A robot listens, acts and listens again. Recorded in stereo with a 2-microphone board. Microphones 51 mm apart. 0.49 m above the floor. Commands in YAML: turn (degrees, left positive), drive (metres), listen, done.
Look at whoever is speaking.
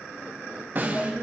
turn: 20
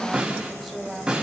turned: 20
done: "Facing the woman speaking."